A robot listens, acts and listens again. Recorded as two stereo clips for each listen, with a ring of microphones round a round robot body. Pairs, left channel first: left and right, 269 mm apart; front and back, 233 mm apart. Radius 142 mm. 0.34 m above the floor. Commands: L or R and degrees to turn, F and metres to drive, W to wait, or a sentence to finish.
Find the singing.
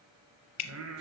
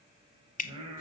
R115
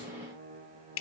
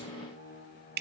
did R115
R40
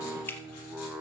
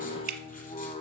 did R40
R10
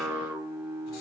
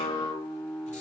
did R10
R80
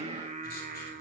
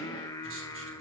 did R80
R65
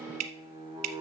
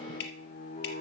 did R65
R25
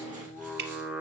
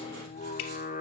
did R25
Facing the singing, 1 to 2 m away.